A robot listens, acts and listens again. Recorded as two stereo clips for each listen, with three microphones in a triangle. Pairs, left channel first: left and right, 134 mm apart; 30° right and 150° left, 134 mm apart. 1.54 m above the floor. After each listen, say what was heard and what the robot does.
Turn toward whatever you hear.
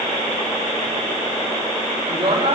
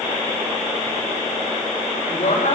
The woman speaking: 45° right. Turn 45° right.
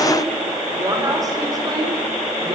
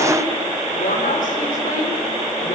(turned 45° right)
The woman speaking is now 30° right. Turn 30° right.
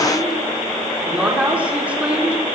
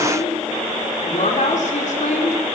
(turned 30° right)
The woman speaking is now 10° right. Turn 10° right.
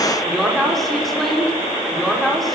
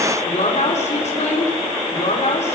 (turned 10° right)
Found it: a woman speaking, straight ahead.